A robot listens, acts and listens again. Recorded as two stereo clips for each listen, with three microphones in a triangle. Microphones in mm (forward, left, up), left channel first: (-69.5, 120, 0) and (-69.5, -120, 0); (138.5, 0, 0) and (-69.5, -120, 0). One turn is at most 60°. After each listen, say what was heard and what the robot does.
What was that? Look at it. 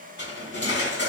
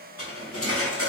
The cutlery clinking: 50° left. Turn 50° left.
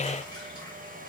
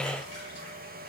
Keep listening.
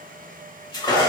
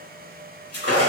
The cutlery clinking is now 20° left. Turn 20° left.
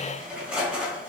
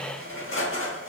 Facing the cutlery clinking, 1 to 2 m away.